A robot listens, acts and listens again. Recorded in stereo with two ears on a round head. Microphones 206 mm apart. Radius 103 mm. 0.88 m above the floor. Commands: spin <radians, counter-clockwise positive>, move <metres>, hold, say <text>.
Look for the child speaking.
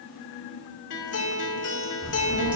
spin -1.57
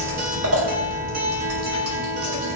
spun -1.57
spin 0.35
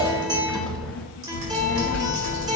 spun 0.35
say Facing the child speaking.